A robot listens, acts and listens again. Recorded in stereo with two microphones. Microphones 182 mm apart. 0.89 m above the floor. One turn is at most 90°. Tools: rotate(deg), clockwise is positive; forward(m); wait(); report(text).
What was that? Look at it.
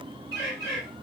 rotate(-60)
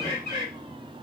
rotate(-60)
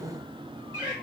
rotate(-20)
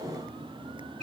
wait()
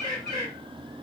report("Facing the bird, 2 to 4 m away.")